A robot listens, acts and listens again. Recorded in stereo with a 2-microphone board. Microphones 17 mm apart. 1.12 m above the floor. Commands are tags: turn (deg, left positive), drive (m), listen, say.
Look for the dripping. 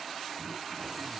<listen/>
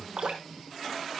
<turn deg="-70"/>
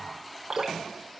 <turn deg="-40"/>
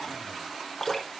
<turn deg="15"/>
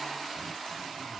<listen/>
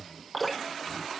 <say>Facing the dripping.</say>